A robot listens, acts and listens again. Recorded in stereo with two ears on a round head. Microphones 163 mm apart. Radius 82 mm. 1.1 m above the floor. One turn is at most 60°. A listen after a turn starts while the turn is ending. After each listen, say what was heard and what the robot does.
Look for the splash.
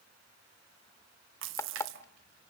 Turn 60° right.
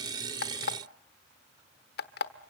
Nothing new. It was at 30° right. Turn 30° right.
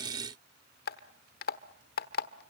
Facing where the splash came from. I can't hear it now.